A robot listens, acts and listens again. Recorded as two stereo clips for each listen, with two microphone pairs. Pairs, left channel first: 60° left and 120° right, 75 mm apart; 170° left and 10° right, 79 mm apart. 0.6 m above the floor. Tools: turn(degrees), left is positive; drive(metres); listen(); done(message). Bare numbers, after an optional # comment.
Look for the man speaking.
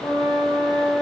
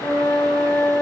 listen()
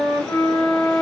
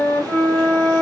listen()
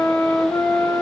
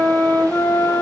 done("I can't make out a man speaking, only a flute.")